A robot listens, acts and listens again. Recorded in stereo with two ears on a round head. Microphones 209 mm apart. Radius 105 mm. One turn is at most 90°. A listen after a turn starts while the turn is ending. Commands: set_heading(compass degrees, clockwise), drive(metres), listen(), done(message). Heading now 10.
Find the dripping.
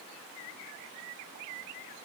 listen()
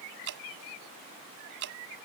set_heading(60)
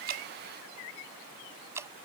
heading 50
set_heading(65)
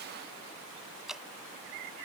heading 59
done("Facing the dripping.")